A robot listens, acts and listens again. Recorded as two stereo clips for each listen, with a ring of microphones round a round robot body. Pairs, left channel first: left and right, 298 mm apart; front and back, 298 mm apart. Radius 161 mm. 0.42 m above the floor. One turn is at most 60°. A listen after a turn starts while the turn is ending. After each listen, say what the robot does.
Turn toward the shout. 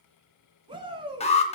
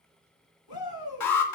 Turn 15° right.
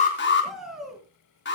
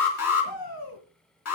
Found it: a shout, straight ahead, over 4 m away.